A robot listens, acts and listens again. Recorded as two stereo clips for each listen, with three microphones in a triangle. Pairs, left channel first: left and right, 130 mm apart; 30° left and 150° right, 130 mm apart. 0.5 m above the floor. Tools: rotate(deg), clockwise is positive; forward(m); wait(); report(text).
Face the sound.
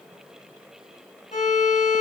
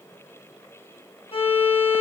rotate(-75)
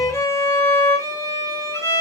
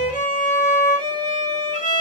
rotate(-25)
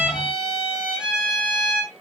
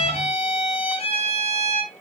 report("Facing the violin, 2 to 4 m away.")